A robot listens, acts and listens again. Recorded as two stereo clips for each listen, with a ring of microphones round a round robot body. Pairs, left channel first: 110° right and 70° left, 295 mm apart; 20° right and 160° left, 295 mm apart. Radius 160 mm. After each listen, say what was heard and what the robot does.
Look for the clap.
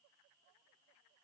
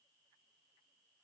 Keep listening.
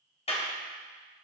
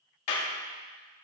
The clap: 40° right. Turn 40° right.
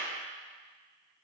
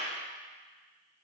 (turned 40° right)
Found it: a clap, straight ahead.